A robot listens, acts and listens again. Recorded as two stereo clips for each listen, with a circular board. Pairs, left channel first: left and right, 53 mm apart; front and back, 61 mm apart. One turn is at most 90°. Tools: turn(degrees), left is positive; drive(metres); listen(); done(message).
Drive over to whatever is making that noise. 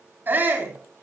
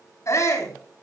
turn(degrees=-40)
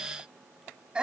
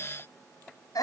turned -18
turn(degrees=-20)
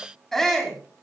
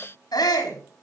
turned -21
drive(metres=1.0)
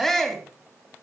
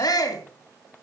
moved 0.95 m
drive(metres=1.0)
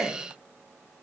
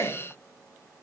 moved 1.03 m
turn(degrees=10)
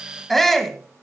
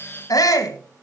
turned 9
drive(metres=1.0)
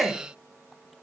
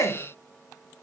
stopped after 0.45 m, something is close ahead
done("Arrived at the shout, straight ahead.")